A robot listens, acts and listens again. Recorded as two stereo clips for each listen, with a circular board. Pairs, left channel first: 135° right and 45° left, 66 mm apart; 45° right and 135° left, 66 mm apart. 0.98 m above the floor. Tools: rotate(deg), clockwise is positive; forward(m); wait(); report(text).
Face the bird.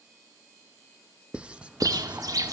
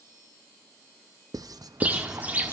rotate(-70)
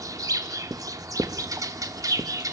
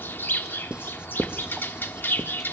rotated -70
rotate(-15)
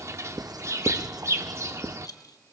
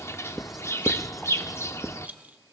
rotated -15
report("Found it: a bird, straight ahead, 1 to 2 m away.")